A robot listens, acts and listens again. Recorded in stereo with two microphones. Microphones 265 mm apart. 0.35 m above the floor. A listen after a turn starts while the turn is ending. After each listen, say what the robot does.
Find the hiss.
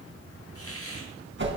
Turn 60° left.
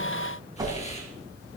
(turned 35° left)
Keep listening.
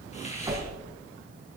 Turn 25° left.
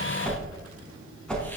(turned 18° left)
Keep listening.
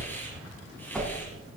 Keep listening.
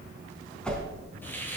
Turn 10° left.
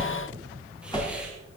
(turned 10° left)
Keep listening.
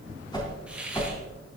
Facing the hiss.